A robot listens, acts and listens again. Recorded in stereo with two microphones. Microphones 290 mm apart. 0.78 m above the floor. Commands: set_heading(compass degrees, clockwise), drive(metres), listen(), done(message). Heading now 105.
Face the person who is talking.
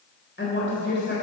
set_heading(65)
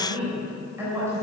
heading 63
set_heading(73)
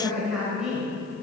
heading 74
done("Facing the woman speaking.")